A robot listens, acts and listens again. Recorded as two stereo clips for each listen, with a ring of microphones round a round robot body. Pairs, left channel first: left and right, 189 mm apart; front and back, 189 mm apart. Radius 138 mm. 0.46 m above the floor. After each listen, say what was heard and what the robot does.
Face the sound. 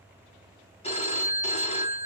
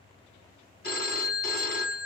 The phone ringing: 35° left. Turn 35° left.
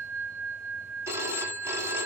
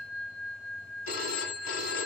The phone ringing is now 15° right. Turn 15° right.
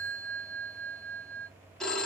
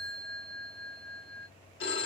Facing the phone ringing, 2 to 4 m away.